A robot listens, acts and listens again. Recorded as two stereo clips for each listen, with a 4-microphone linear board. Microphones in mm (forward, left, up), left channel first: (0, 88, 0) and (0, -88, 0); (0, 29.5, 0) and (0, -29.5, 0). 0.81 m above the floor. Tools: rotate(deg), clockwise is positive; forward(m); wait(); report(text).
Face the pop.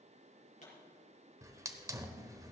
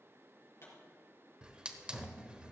rotate(-45)
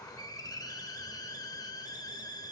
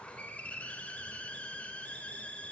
wait()
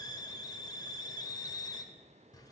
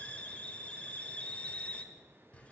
report("I heard a pop, but can't make it out now. It was about straight ahead or 90° left.")